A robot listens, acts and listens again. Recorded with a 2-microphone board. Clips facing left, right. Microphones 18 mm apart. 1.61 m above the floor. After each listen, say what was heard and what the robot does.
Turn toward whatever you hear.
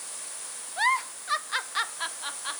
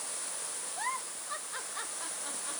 The giggle: about 70° left or 110° left. Turn 70° left.
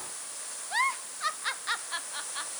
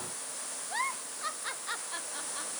So it is at 35° left. Turn 35° left.
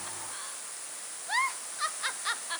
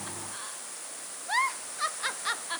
Facing the giggle.